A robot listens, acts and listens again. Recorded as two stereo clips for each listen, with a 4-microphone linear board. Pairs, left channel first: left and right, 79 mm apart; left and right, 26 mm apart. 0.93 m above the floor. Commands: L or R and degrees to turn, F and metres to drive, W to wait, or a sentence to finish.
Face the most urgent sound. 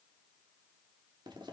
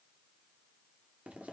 W
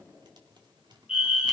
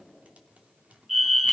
R30
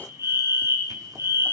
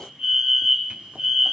R140
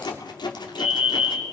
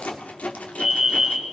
R10
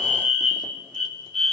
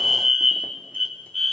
Found it: a fire alarm, straight ahead.